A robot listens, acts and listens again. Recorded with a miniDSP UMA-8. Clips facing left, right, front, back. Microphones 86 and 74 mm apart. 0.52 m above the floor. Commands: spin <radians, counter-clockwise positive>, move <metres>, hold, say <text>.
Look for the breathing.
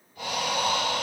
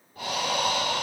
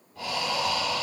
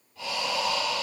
spin -0.70
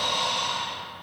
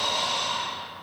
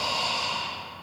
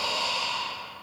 spin -0.52
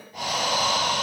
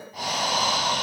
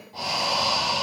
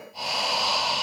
say Found it: breathing, straight ahead, 1 to 2 m away.